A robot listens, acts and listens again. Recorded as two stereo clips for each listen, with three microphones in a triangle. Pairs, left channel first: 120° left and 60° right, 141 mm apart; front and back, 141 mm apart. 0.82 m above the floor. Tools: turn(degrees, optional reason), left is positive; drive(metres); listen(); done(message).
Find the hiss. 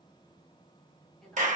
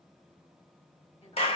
listen()
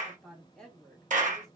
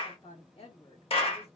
listen()
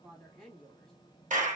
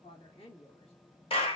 done("I can't make out a hiss, only a clap and a woman speaking.")